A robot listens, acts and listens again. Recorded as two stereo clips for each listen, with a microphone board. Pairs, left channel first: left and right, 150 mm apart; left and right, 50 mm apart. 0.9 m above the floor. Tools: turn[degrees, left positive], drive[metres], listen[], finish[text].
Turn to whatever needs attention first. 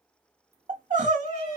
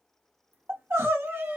Thought: The crying: about 55° right or 125° right.
Action: turn[-55]
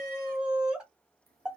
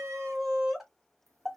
Action: finish[Facing the crying.]